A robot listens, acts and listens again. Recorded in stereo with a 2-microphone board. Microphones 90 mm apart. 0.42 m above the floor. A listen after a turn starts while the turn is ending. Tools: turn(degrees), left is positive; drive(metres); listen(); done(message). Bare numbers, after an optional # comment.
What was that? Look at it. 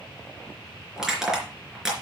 turn(-30)
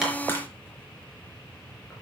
# So it is at 25° left.
turn(25)
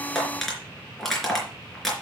done("Found it: crushing, straight ahead.")